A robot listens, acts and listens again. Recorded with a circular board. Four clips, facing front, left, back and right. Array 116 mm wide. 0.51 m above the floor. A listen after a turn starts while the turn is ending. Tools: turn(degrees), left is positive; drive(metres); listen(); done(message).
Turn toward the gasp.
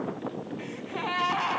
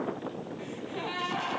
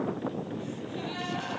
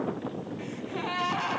done("Found it: a gasp, straight ahead, 2 to 4 m away.")